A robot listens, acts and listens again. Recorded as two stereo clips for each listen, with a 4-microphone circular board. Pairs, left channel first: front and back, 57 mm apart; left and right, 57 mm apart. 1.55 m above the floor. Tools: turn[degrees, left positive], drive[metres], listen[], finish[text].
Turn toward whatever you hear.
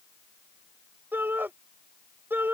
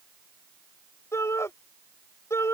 Thought: The shout: 125° left.
Action: turn[125]
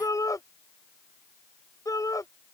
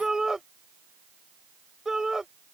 Thought: The shout is now 10° right.
Action: turn[-10]
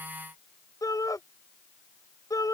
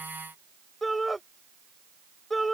Action: finish[Facing the shout.]